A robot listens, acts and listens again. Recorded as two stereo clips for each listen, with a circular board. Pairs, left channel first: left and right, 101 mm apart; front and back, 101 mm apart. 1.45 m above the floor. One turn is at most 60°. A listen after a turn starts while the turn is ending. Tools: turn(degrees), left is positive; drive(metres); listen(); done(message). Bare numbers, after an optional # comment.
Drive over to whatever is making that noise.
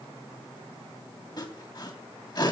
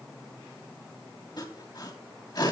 # The sawing: 45° left.
turn(45)
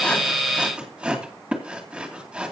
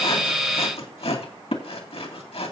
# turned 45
# The sawing is now 10° right.
turn(-10)
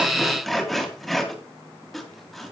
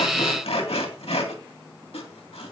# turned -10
drive(1.0)
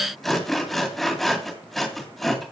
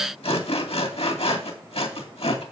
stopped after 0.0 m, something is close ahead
done("Blocked. The sawing is further on, straight ahead.")